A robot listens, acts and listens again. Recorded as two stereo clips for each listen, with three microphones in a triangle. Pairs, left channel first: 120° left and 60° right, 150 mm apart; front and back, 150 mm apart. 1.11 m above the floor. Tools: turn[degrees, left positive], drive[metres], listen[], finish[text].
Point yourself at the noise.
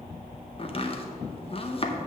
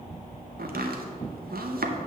Thought: The chopping: 175° left.
Action: turn[175]
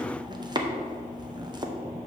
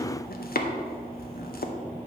Action: finish[Found it: chopping, straight ahead, under 1 m away.]